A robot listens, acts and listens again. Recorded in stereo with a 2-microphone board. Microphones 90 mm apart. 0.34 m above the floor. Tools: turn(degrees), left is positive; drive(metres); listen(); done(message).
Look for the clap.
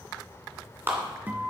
turn(degrees=-25)
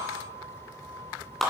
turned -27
done("Found it: a clap, straight ahead, 2 to 4 m away.")